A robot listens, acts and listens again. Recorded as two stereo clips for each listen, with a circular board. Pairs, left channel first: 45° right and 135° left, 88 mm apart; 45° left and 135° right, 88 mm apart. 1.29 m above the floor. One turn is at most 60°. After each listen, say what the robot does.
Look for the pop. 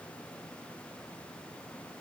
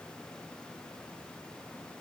Keep listening.
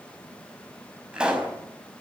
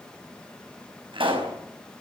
Turn 60° right.
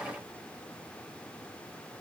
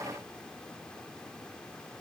Turn 60° right.
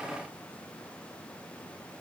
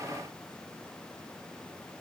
Turn 25° right.
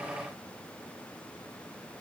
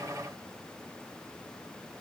I heard a pop from this way, but can't make it out now.